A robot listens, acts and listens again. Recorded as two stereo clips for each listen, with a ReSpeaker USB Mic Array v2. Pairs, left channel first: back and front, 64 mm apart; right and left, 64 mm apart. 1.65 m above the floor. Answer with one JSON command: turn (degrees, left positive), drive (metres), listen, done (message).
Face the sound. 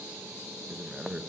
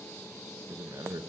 {"turn": 75}
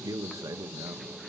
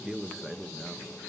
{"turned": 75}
{"done": "Facing the man speaking."}